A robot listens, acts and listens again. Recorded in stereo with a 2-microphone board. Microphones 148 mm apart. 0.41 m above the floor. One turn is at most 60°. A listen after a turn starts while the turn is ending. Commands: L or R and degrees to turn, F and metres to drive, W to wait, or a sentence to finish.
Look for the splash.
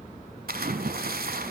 R60
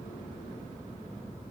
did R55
R35
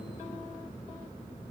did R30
Facing where the splash came from. I can't hear it now.